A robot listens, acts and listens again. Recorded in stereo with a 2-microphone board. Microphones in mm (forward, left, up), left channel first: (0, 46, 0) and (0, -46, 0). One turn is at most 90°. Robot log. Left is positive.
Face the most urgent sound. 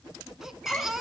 cmd yaw -30
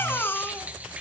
note: So it is at 25° left.
cmd yaw +25
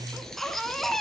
end: Found it: a baby crying, straight ahead.